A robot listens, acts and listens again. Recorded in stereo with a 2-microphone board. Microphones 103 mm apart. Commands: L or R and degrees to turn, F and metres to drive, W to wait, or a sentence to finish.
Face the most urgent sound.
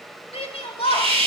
L65
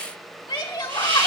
L50
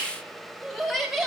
Found it: a shout, straight ahead.